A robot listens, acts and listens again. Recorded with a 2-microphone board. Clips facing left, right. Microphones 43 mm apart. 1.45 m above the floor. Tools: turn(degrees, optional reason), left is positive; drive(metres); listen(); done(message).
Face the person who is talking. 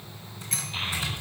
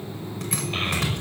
turn(degrees=-60, reason="The child speaking: about 60° right or 120° right.")
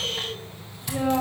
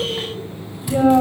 turn(degrees=-50, reason="So it is at 50° right.")
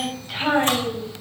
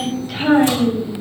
done("Facing the child speaking.")